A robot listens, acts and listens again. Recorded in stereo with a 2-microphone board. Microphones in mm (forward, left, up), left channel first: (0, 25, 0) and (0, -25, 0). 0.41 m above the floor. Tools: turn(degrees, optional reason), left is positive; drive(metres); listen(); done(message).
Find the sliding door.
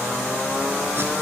listen()
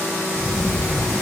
turn(degrees=30)
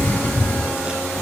turn(degrees=150, reason="So it is at 150° left.")
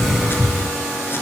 done("Found it: a sliding door, straight ahead, over 4 m away.")